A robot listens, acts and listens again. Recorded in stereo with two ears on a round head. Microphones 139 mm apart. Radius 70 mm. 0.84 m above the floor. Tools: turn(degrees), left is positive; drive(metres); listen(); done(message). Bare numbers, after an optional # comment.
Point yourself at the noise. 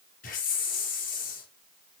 # The hiss: about 55° left or 125° left.
turn(55)
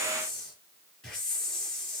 done("Facing the hiss, over 4 m away.")